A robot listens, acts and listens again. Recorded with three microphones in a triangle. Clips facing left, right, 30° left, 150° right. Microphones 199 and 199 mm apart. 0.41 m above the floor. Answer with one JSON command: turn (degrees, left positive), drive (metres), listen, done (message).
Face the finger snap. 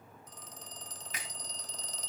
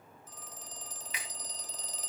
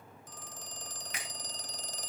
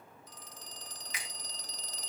{"turn": 55}
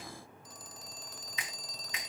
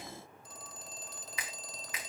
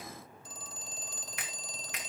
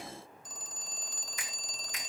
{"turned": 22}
{"turn": 30}
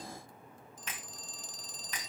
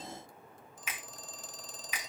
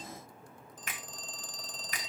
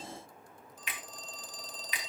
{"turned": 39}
{"turn": -10}
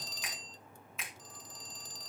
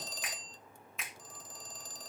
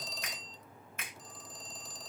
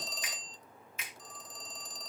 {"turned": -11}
{"done": "Facing the finger snap, 2 to 4 m away."}